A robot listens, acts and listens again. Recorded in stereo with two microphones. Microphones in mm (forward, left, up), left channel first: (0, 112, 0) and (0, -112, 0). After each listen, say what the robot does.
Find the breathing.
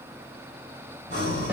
Turn 45° left.
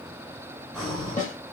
Found it: breathing, straight ahead.